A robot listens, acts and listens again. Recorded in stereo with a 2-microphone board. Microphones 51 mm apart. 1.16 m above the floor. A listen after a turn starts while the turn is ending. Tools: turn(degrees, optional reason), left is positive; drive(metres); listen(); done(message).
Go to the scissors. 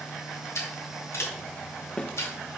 turn(degrees=70, reason="The scissors: about 70° left or 110° left.")
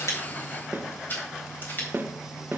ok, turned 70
turn(degrees=40, reason="So it is at 40° left.")
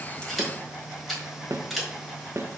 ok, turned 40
drive(metres=1.0)
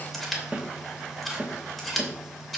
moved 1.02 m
drive(metres=1.0)
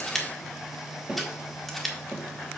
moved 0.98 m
drive(metres=1.0)
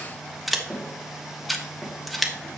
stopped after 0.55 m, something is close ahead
done("Arrived at the scissors, straight ahead.")